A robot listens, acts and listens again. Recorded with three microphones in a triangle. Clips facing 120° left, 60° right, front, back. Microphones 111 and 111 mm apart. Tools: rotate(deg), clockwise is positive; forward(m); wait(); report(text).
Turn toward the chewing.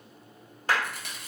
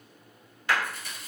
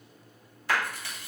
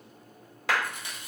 rotate(-110)
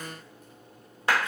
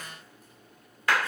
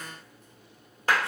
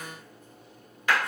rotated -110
wait()
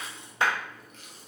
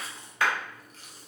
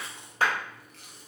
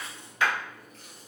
report("Facing the chewing, under 1 m away.")